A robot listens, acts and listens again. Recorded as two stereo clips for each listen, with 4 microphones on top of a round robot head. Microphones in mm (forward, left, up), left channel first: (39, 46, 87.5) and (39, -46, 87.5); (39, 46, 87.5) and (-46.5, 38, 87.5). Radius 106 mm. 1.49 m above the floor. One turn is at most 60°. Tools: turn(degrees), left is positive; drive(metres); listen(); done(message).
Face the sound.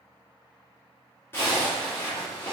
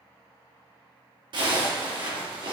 turn(degrees=60)
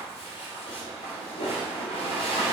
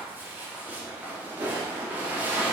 turn(degrees=60)
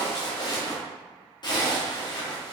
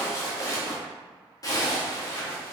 turn(degrees=50)
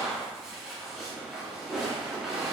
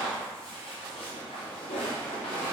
done("Found it: a zipper, straight ahead.")